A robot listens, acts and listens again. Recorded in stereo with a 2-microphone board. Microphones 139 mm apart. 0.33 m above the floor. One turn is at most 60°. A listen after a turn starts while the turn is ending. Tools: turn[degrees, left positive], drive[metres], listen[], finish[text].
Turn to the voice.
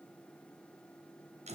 Action: listen[]
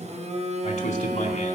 Thought: The man speaking: about 50° left or 130° left.
Action: turn[50]
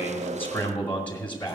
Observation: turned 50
Thought: So it is at 15° left.
Action: turn[15]
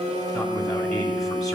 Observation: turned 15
Action: finish[Facing the man speaking, 2 to 4 m away.]